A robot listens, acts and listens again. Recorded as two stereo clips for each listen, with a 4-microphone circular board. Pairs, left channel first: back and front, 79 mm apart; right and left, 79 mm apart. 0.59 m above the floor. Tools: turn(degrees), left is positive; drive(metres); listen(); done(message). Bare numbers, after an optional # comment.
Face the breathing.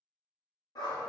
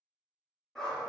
listen()
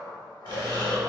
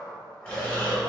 # The breathing: 15° right.
turn(-15)
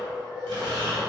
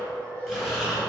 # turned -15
done("Found it: breathing, straight ahead, under 1 m away.")